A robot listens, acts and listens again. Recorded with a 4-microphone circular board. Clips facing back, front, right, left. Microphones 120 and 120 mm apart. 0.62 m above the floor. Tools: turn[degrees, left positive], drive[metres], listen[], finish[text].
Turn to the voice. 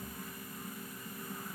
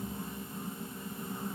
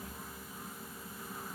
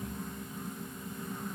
Action: listen[]
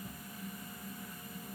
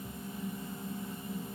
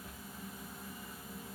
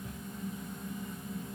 Action: listen[]
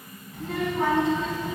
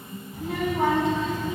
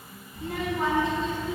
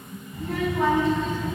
Thought: The child speaking: 65° left.
Action: turn[65]
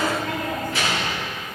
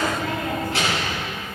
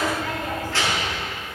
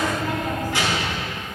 Thought: The child speaking is now 15° left.
Action: turn[15]
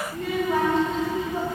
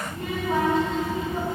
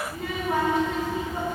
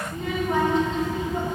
Thought: The child speaking is now 10° right.
Action: turn[-10]
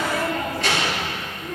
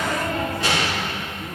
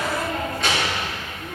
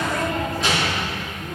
Action: finish[Found it: a child speaking, straight ahead, over 4 m away.]